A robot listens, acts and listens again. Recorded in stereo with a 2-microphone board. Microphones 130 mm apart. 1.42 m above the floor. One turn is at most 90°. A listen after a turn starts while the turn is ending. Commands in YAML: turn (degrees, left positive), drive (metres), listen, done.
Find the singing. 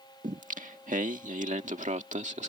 turn: -60
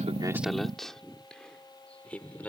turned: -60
turn: 10
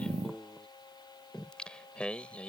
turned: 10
turn: 10
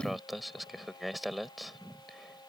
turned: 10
done: "Facing the singing."